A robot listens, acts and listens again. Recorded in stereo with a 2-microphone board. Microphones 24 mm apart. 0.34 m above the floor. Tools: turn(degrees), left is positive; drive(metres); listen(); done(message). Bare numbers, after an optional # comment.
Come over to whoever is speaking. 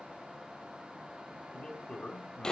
# The man speaking: about 35° left or 145° left.
turn(35)
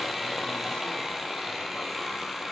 listen()
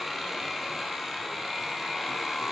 listen()
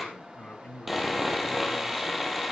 # So it is at 105° left.
turn(105)
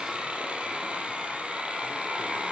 listen()
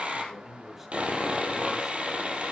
# The man speaking is now 15° right.
turn(-15)
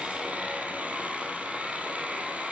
listen()
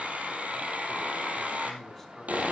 listen()
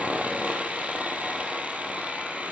done("Facing where the man speaking came from. I can't hear it now. I did not reach it.")